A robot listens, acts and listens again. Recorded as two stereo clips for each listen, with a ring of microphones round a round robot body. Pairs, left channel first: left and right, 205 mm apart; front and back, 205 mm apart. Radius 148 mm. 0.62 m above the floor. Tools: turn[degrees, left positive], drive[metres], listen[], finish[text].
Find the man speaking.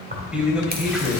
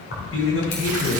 Action: finish[Found it: a man speaking, straight ahead.]